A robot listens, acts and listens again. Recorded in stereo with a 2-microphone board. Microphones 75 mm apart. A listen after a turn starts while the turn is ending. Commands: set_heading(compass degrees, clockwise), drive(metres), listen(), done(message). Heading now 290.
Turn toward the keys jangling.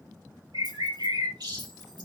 listen()
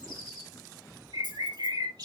set_heading(20)
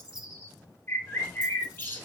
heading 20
listen()
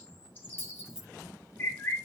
done("Facing the keys jangling.")